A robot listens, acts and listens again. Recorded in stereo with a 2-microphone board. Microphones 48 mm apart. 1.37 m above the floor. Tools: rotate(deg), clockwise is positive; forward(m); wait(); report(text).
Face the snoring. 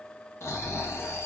rotate(-70)
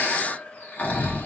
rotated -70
rotate(-35)
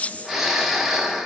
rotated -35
report("Found it: snoring, straight ahead.")